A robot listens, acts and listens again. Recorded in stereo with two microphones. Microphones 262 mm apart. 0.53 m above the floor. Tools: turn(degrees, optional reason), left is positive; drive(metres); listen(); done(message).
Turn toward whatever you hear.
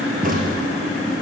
turn(degrees=-35, reason="The crack: about 35° right or 145° right.")
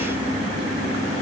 listen()
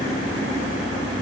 done("I heard a crack, but can't make it out now. It was about straight ahead or 110° right.")